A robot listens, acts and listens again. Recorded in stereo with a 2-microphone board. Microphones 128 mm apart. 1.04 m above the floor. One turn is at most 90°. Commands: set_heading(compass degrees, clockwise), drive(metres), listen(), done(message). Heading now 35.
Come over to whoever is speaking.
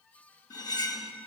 listen()
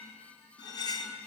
listen()
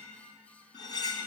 done("I can't make out anyone speaking, only cutlery clinking.")